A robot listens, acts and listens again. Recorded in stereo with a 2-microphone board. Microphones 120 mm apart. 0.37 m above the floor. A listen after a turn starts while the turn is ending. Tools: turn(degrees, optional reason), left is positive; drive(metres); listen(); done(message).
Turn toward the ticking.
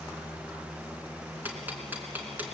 turn(degrees=-15, reason="The ticking: about 15° right or 165° right.")
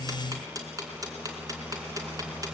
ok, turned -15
turn(degrees=-150, reason="So it is at 150° right.")
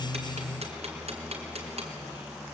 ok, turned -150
turn(degrees=-65, reason="The ticking is now 65° right.")
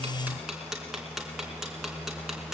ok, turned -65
done("Found it: ticking, straight ahead.")